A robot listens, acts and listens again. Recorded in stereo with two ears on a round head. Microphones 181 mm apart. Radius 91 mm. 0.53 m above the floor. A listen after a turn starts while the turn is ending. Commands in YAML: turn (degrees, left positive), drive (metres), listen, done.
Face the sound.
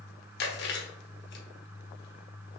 turn: 55
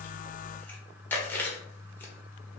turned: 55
turn: 10
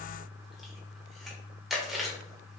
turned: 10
done: "Found it: chewing, straight ahead, 1 to 2 m away."